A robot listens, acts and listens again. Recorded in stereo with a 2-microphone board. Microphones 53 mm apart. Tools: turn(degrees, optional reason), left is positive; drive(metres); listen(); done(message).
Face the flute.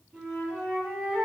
turn(degrees=-20, reason="The flute: about 20° right or 160° right.")
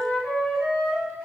done("Facing the flute, 1 to 2 m away.")